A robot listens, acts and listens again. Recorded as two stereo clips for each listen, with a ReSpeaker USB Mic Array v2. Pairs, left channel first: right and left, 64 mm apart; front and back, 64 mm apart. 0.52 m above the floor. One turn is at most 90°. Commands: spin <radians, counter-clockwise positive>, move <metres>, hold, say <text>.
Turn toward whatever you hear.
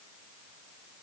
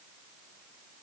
hold
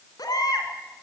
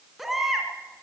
spin -1.57
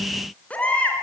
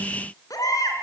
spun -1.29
spin -0.35
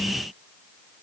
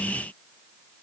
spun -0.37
hold
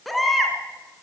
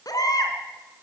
say Found it: a baby crying, straight ahead.